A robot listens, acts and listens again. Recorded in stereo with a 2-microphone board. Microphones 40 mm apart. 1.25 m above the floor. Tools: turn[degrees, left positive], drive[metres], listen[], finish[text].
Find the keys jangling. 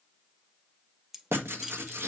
Action: turn[-30]
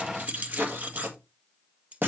Thought: So it is at 140° right.
Action: turn[-140]
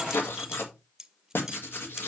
Thought: The keys jangling is now 10° right.
Action: turn[-10]
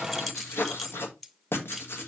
Action: finish[Found it: keys jangling, straight ahead, under 1 m away.]